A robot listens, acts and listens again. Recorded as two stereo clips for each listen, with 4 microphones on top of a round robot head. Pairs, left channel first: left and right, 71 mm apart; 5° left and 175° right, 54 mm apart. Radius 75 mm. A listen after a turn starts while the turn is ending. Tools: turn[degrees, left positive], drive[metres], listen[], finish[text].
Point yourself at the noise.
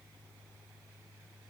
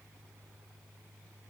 Action: listen[]
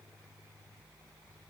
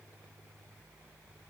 Action: listen[]
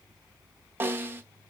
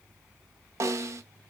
Thought: The snare drum: 150° right.
Action: turn[-150]
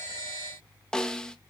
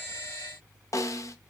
Thought: The snare drum is now 10° left.
Action: turn[10]
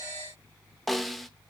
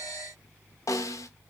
Action: finish[Found it: a snare drum, straight ahead, under 1 m away.]